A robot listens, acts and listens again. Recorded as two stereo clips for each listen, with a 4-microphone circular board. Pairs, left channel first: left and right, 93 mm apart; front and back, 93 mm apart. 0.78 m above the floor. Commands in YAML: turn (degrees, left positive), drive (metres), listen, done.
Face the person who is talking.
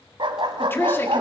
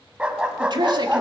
turn: 155
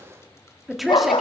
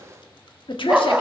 done: "Found it: a woman speaking, straight ahead."